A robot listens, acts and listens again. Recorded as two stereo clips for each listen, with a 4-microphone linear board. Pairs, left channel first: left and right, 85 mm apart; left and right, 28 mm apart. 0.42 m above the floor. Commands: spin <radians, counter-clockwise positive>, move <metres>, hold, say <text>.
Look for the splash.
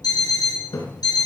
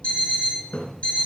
spin 1.57
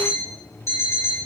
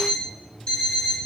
say I heard a splash from this way, but can't make it out now.